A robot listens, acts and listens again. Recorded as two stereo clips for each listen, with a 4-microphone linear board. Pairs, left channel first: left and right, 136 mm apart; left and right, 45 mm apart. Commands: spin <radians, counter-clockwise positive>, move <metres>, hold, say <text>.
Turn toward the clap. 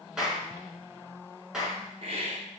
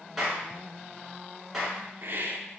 spin -0.52
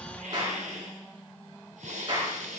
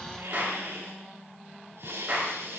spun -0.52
spin -2.53
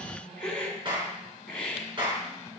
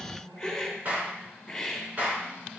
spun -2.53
spin -0.61
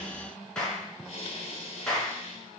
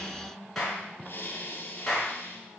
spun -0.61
say Facing the clap.